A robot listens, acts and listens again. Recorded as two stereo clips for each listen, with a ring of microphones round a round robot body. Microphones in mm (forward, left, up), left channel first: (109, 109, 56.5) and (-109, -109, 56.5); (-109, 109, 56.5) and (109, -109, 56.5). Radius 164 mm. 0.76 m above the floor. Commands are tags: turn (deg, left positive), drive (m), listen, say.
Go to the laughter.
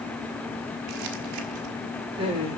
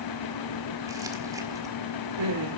<turn deg="-60"/>
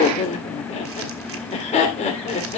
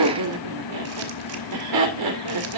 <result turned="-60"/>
<turn deg="-25"/>
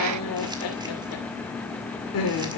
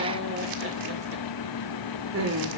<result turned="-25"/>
<drive m="1.0"/>
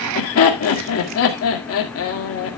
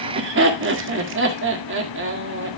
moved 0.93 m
<drive m="1.0"/>
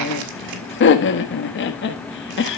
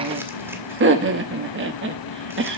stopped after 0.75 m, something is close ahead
<say>I am next to the laughter.</say>